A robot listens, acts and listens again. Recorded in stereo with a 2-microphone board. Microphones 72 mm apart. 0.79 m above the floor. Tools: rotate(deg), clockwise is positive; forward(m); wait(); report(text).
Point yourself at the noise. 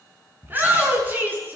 rotate(30)
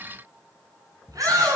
rotate(120)
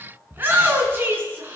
rotate(30)
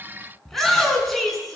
report("Facing the shout.")